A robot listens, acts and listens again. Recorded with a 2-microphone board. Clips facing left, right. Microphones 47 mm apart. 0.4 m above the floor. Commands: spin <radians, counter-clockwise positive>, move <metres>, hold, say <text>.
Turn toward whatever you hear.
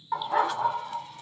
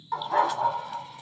spin 0.52
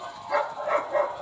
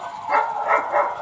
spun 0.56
spin -1.13
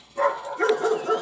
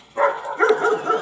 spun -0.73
spin -0.87
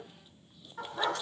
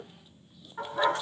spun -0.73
spin -0.44
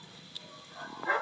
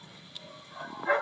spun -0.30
spin -0.17
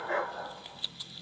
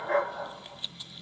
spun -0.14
say Found it: a dog barking, straight ahead.